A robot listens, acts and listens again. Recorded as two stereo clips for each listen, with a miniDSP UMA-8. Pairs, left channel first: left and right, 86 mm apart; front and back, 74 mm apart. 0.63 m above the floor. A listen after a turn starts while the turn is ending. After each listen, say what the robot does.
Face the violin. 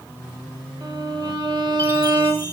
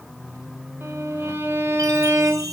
Turn 120° right.
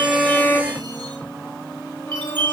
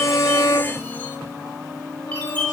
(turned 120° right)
Turn 20° left.
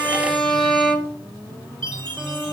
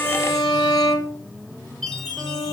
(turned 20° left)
Facing the violin, 1 to 2 m away.